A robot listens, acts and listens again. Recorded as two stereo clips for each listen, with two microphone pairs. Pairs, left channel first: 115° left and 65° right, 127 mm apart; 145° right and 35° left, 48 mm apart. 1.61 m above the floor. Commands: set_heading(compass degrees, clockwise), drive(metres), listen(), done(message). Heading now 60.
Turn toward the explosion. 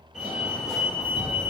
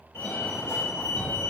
set_heading(50)
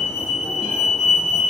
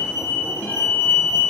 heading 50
done("Facing where the explosion came from. I can't hear it now.")